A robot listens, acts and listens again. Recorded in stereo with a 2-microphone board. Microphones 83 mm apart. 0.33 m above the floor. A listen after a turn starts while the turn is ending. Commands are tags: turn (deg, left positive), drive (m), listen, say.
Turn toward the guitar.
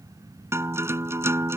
<turn deg="-30"/>
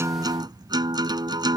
<turn deg="-120"/>
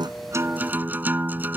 <turn deg="-25"/>
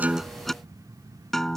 <say>Found it: a guitar, straight ahead.</say>